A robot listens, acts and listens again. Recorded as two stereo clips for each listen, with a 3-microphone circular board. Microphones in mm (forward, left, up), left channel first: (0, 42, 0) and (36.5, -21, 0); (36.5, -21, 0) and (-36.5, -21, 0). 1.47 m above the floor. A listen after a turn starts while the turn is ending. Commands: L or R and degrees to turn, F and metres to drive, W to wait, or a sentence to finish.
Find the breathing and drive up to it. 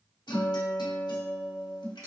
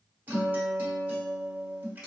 W
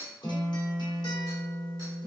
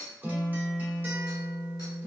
W
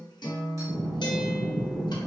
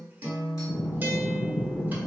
L15
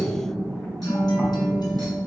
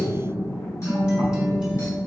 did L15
F1.0
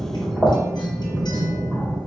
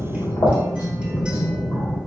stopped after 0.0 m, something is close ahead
Blocked. The breathing is further on, straight ahead.